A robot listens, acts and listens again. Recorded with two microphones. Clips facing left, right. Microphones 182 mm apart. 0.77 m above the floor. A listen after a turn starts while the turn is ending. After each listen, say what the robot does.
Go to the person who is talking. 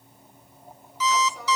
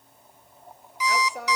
Turn 65° right.
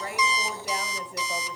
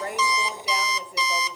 Drive 1.0 m forward.
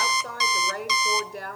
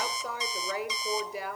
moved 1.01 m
Drive 1.0 m forward.
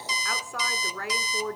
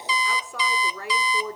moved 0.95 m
Drive 1.0 m forward.
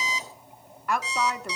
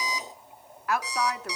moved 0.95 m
Drive 1.0 m forward.
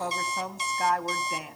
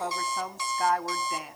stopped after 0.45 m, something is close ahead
Arrived at the woman speaking, straight ahead.